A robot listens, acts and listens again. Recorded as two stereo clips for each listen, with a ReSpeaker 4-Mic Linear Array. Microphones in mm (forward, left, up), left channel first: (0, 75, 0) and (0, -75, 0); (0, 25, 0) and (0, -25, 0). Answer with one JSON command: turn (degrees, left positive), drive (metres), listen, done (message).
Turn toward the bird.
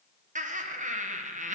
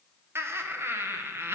{"listen": true}
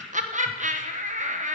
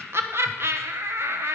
{"listen": true}
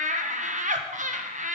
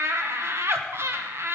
{"done": "I can't make out a bird, only laughter."}